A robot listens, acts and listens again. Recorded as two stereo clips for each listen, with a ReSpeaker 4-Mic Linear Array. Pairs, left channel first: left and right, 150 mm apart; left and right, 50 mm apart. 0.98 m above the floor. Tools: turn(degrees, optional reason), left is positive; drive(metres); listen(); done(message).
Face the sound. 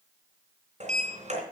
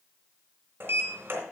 turn(degrees=-55, reason="The sliding door: about 55° right or 125° right.")
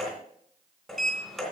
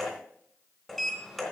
done("Found it: a sliding door, straight ahead, 2 to 4 m away.")